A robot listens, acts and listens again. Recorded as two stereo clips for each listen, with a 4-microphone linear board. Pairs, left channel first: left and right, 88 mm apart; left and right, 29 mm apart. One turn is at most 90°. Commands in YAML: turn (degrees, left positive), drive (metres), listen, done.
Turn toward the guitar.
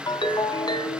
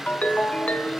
listen: true
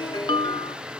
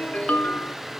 listen: true
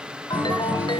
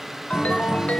turn: -20
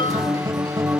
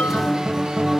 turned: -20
turn: -90
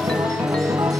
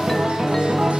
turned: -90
turn: -50
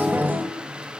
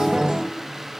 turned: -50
turn: -25
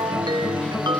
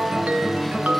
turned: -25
turn: 15
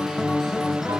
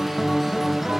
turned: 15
done: "Found it: a guitar, straight ahead, 2 to 4 m away."